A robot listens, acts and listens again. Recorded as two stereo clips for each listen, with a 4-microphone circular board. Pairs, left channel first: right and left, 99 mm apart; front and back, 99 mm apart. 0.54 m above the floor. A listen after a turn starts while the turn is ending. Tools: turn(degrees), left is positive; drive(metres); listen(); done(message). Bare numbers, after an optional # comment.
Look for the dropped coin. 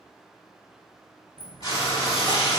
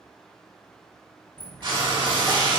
# The dropped coin: 70° left.
turn(70)
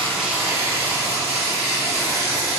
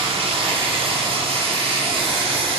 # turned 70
done("Facing where the dropped coin came from. I can't hear it now.")